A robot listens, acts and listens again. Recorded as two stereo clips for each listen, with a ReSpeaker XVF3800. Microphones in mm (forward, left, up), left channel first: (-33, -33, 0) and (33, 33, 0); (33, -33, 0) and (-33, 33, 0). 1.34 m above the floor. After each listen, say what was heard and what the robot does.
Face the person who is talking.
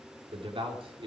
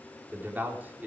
The man speaking: 65° left. Turn 65° left.
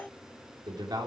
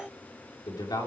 Found it: a man speaking, straight ahead, 2 to 4 m away.